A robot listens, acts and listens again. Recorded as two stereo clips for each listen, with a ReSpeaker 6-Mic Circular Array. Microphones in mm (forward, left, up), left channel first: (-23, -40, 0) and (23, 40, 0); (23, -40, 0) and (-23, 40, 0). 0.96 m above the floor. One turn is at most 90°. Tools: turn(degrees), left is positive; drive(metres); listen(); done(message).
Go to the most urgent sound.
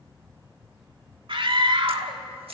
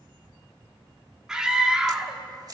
turn(degrees=35)
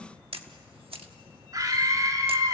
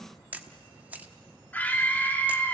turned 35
turn(degrees=10)
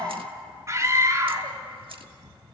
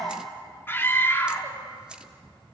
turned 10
drive(metres=1.0)
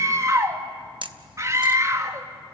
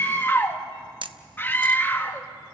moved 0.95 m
drive(metres=1.0)
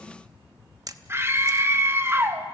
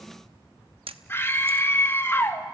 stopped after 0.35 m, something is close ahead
done("Arrived at the scream, straight ahead.")